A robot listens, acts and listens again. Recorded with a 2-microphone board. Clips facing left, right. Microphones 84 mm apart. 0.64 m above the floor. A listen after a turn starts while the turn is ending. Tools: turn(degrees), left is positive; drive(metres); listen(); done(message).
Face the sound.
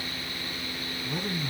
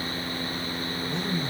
turn(degrees=30)
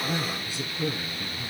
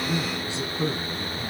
turn(degrees=-25)
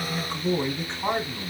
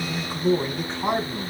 turn(degrees=-10)
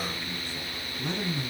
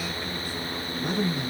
turn(degrees=-10)
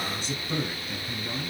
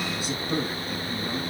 done("Facing the man speaking.")